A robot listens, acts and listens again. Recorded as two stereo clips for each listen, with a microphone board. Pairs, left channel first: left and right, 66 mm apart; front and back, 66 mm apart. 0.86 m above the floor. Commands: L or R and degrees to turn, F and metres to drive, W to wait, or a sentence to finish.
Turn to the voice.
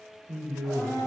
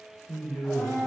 R75
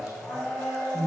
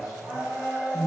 R30
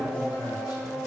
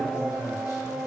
W
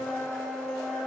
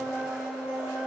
W
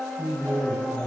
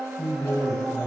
R15
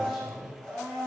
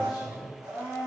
Found it: a man speaking, straight ahead, under 1 m away.